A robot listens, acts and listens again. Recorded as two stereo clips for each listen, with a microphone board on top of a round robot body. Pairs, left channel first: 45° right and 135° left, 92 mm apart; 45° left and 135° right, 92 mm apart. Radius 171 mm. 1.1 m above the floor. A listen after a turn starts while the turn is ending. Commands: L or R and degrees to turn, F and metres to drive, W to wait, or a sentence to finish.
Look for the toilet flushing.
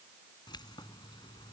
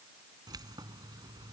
W
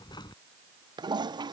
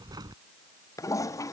L100
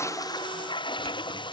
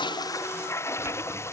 R15
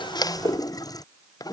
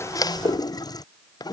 Facing the toilet flushing.